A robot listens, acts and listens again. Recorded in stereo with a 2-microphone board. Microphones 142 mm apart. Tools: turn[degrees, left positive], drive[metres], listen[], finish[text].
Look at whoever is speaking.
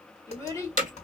Thought: The child speaking: about 20° left or 160° left.
Action: turn[20]
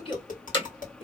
Thought: So it is at 135° left.
Action: turn[135]
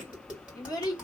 Thought: The child speaking is now 30° left.
Action: turn[30]
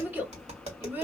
Thought: The child speaking is now 15° right.
Action: turn[-15]
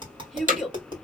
Action: finish[Facing the child speaking, 1 to 2 m away.]